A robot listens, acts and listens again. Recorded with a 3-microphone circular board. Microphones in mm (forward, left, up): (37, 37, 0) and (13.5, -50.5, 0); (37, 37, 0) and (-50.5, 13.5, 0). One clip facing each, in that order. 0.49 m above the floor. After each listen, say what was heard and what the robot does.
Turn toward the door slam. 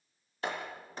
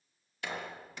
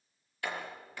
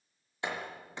The door slam: 125° left. Turn 125° left.
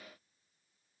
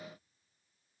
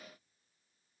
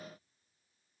Facing where the door slam came from. I can't hear it now.